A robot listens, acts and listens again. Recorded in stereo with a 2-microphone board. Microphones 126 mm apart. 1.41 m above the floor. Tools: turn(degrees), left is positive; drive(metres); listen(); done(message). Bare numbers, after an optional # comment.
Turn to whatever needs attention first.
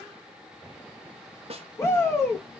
# The shout: about 20° left or 160° left.
turn(20)
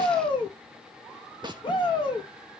# So it is at 140° left.
turn(140)
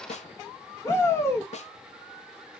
# The shout is now 25° left.
turn(25)
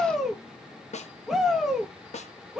done("Found it: a shout, straight ahead.")